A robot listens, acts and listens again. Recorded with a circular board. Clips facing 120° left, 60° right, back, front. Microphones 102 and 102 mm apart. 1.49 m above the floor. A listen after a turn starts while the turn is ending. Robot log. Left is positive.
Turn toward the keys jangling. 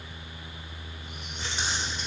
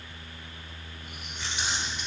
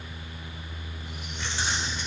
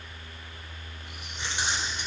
note: The keys jangling: 70° left.
cmd yaw +70
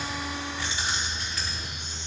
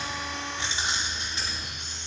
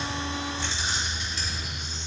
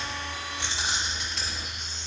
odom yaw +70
end: Facing the keys jangling.